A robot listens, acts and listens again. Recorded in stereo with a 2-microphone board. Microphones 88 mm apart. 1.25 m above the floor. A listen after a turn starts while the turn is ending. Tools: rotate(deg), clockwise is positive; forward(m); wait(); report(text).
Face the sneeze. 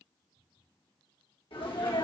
rotate(-90)
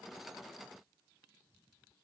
report("Facing where the sneeze came from. I can't hear it now.")